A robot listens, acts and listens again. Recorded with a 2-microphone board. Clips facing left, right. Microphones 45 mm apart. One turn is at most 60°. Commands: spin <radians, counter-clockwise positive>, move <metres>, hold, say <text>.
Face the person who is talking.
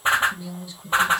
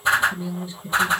spin -0.52
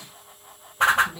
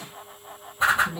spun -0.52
say Found it: a woman speaking, straight ahead, 2 to 4 m away.